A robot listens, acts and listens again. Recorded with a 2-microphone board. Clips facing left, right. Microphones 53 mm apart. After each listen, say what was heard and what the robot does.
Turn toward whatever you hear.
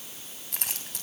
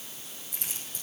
The keys jangling: about 65° left or 115° left. Turn 65° left.
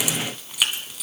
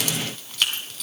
So it is at 10° left. Turn 10° left.
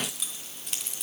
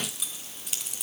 Facing the keys jangling.